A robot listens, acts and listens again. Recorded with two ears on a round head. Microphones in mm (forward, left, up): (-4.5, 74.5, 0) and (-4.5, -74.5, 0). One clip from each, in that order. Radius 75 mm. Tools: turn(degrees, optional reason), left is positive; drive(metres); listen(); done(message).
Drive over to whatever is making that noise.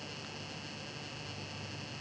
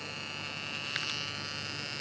listen()
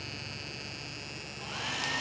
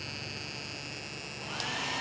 turn(degrees=15, reason="The hair dryer: about 15° left or 165° left.")
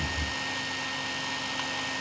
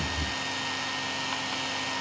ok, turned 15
drive(metres=1.0)
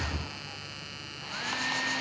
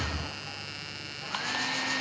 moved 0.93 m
drive(metres=1.0)
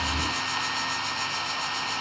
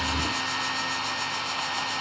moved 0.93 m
turn(degrees=10, reason="The hair dryer is now 10° left.")
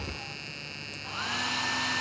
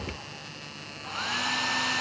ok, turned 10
drive(metres=1.0)
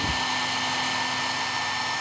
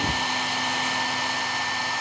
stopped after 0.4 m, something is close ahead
done("Arrived at the hair dryer, straight ahead.")